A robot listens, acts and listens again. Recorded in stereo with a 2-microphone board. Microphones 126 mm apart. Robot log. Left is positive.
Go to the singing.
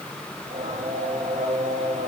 note: The singing: about 75° right or 105° right.
cmd yaw -75
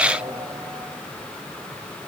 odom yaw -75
note: So it is at 30° right.
cmd yaw -30
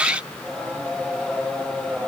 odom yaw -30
cmd fwd 1.0
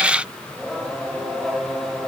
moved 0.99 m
cmd fwd 1.0
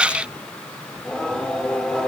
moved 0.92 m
cmd fwd 1.0
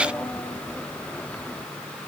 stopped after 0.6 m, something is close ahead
note: The singing is now 10° left.
cmd yaw +10
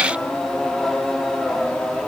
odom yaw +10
end: Arrived at the singing, straight ahead.